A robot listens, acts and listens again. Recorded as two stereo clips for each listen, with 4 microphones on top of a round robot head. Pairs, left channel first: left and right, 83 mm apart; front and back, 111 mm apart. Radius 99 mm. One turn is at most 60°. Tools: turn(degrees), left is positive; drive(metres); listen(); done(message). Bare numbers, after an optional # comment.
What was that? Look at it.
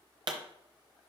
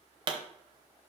# The pop: 130° right.
turn(-60)
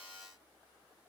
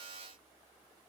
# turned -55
# Nothing new. It was at 75° right.
turn(-60)
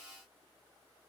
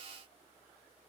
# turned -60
# Nothing new. It was at 15° right.
turn(-15)
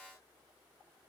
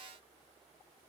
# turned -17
done("I heard a pop from this way, but can't make it out now.")